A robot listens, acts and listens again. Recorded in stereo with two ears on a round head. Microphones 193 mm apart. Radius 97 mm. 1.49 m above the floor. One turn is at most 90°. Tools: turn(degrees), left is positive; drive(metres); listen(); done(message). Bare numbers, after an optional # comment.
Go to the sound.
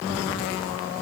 listen()
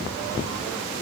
listen()
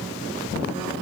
done("I can't make out anything to turn to.")